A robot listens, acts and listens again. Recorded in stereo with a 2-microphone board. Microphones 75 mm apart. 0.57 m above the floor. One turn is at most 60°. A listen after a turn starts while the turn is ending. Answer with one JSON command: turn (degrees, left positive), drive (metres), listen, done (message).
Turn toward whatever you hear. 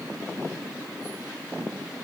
{"listen": true}
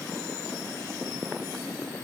{"listen": true}
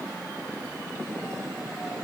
{"done": "I can't make out anything to turn to."}